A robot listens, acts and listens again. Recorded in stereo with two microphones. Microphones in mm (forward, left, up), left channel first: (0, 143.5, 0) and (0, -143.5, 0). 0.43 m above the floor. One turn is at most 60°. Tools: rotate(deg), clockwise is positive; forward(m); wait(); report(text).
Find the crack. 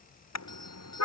wait()
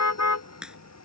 rotate(30)
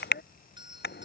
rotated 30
wait()
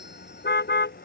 report("I heard a crack, but can't make it out now. It was about 25° left or 145° right.")